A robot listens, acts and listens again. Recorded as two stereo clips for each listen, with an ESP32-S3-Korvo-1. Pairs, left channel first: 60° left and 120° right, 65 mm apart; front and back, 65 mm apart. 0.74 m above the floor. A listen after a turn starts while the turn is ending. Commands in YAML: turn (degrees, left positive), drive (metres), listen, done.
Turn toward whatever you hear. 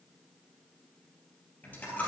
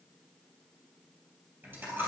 turn: 120
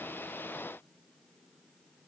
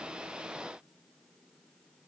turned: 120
done: "Facing where the dropped coin came from. I can't hear it now."